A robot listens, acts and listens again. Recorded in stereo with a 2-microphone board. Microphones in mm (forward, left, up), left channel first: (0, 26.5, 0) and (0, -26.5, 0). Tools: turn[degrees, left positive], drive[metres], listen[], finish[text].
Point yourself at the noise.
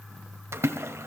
Thought: The splash: about 55° right or 125° right.
Action: turn[-55]
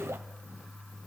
Action: listen[]
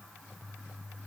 Action: finish[I heard a splash, but can't make it out now. It was about straight ahead or 70° right.]